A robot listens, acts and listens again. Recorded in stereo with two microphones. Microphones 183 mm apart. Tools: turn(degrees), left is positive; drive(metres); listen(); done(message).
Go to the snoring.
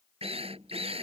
listen()
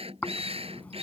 turn(degrees=30)
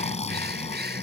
turn(degrees=140)
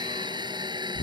turn(degrees=50)
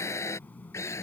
listen()
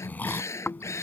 turn(degrees=10)
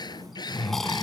drive(metres=1.0)
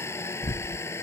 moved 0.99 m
turn(degrees=10)
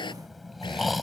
drive(metres=1.0)
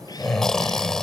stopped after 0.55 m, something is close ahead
done("I am next to the snoring.")